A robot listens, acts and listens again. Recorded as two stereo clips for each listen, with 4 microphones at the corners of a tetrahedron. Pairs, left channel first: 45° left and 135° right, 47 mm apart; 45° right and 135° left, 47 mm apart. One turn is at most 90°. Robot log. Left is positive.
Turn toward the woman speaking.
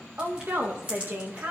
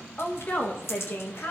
note: The woman speaking: 85° right.
cmd yaw -85
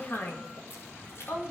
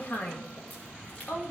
note: The woman speaking is now 10° left.
cmd yaw +10
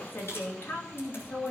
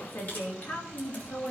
end: Facing the woman speaking, 2 to 4 m away.